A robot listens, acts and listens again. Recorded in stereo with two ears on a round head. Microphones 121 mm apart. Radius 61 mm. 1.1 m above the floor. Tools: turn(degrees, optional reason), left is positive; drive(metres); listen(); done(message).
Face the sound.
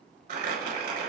turn(degrees=-70, reason="The crumpling: about 70° right or 110° right.")
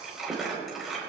done("Found it: crumpling, straight ahead.")